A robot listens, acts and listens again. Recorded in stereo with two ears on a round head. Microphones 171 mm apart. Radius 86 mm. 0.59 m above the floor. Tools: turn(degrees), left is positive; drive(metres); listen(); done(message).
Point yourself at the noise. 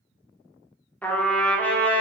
turn(degrees=30)
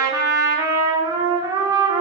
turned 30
turn(degrees=-20)
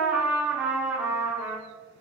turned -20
done("Found it: a trumpet, straight ahead, under 1 m away.")